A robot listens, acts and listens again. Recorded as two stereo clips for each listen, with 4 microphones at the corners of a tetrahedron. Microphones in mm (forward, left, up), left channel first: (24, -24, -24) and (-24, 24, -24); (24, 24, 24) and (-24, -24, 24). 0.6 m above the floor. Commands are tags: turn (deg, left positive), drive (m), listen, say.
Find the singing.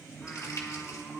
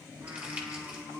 <turn deg="-130"/>
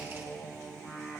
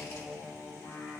<turn deg="20"/>
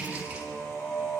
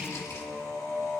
<turn deg="10"/>
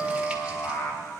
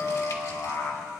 <say>Facing the singing.</say>